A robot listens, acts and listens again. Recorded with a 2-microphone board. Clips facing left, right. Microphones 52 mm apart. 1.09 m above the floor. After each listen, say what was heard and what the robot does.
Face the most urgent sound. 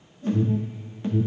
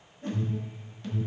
The alarm: about 30° left or 150° left. Turn 30° left.
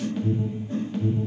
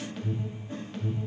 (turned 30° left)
Found it: an alarm, straight ahead.